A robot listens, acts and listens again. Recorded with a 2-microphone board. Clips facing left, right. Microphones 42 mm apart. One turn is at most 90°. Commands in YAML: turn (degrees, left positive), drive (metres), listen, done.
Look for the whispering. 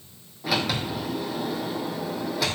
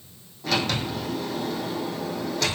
listen: true
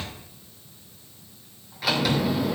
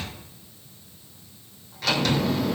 listen: true
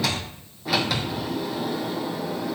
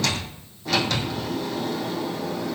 done: "I can't make out whispering to turn to."